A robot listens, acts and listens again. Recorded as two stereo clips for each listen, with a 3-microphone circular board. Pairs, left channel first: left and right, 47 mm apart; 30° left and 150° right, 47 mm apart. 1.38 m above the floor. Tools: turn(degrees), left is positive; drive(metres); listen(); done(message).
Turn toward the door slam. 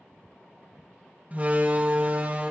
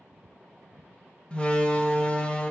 turn(degrees=-35)
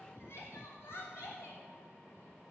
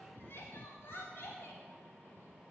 done("Facing where the door slam came from. I can't hear it now.")